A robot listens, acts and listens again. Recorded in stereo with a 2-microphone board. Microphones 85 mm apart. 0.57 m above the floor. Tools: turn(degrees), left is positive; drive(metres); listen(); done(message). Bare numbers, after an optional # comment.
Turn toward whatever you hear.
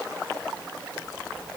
listen()
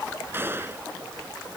# The gunshot: about 25° right or 155° right.
turn(-25)
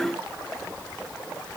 listen()
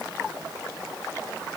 done("I heard a gunshot, but can't make it out now. It was about straight ahead or 130° right.")